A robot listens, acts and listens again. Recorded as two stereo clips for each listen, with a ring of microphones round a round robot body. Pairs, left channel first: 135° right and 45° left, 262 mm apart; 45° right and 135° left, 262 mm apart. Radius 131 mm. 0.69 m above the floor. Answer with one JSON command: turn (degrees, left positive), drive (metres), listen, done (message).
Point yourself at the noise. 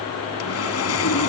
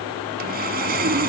{"turn": -170}
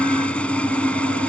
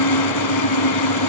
{"turn": -50}
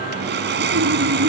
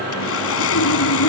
{"done": "Found it: sawing, straight ahead."}